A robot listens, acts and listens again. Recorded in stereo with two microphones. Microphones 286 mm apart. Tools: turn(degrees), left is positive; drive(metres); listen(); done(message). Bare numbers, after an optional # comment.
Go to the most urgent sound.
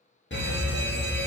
# The fire alarm: about 40° left or 140° left.
turn(40)
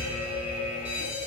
# So it is at 90° left.
turn(90)
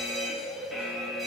drive(1.0)
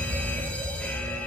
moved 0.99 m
# The fire alarm is now 10° left.
turn(10)
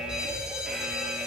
drive(1.0)
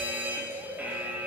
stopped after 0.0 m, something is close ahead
# The fire alarm is now 10° right.
turn(-10)
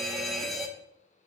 done("Arrived at the fire alarm, straight ahead.")